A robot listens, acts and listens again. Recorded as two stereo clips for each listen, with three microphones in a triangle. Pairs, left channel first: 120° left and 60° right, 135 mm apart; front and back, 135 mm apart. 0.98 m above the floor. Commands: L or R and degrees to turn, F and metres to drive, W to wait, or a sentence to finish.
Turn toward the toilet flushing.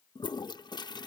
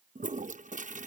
L175
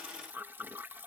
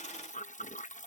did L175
L15
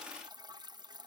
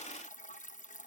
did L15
Facing the toilet flushing.